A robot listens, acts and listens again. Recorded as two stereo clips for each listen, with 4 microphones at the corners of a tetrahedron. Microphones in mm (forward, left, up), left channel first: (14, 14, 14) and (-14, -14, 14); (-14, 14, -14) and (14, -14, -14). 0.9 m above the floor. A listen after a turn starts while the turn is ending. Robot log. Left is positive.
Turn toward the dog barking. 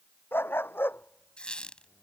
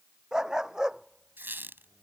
note: The dog barking: 25° left.
cmd yaw +25
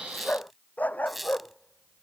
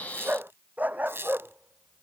end: Found it: a dog barking, straight ahead.